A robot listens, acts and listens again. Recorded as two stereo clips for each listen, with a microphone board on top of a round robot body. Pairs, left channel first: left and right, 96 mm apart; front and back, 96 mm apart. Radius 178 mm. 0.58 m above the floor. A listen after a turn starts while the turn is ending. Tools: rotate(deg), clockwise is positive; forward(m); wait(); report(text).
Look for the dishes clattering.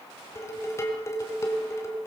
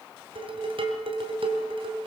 rotate(-150)
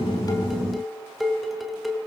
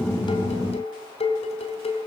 report("Facing the dishes clattering.")